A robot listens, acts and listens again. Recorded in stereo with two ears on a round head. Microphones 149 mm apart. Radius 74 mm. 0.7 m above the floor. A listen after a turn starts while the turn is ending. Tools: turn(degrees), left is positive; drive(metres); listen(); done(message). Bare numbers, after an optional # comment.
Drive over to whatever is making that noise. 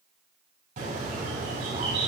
# The bird: about 55° right or 125° right.
turn(-55)
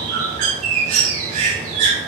# So it is at 60° right.
turn(-60)
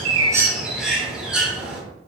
drive(1.0)
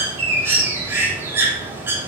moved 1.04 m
# The bird is now 20° right.
turn(-20)
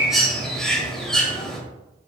drive(1.0)
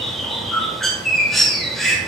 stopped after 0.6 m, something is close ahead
done("Arrived at the bird, straight ahead.")